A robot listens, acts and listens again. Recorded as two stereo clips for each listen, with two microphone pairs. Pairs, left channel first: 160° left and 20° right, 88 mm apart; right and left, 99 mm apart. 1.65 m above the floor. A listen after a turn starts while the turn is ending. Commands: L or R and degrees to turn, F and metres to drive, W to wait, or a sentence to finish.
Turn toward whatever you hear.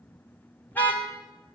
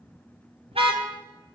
L90
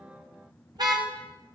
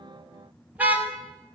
L15
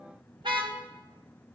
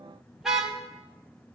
Facing the car horn, 2 to 4 m away.